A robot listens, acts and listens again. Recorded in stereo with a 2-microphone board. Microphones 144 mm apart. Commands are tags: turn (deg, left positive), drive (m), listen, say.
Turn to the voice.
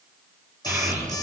<turn deg="-30"/>
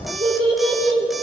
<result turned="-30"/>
<turn deg="-140"/>
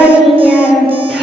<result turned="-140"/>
<say>Found it: a child speaking, straight ahead, over 4 m away.</say>